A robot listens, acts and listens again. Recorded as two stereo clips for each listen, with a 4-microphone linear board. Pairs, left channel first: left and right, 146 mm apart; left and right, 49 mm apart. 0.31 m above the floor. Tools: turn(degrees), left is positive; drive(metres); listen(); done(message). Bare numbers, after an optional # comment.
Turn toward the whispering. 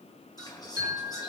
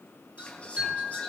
# The whispering: about 25° left or 155° left.
turn(25)
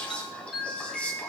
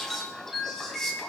# So it is at 10° left.
turn(10)
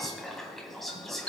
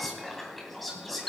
done("Found it: whispering, straight ahead.")